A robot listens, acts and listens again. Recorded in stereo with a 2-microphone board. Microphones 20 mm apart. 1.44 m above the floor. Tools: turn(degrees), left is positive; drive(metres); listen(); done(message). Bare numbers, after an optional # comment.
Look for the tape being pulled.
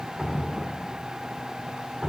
listen()
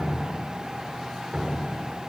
listen()
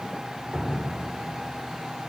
done("I can't make out tape being pulled, only dripping.")